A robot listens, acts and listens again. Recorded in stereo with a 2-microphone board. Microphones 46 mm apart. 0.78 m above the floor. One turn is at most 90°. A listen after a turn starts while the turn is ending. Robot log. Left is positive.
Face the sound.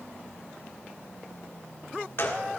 note: The gunshot: about 55° left or 125° left.
cmd yaw +55
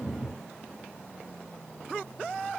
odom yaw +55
cmd idle
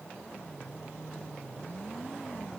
end: I heard a gunshot, but can't make it out now. It was about straight ahead or 70° left.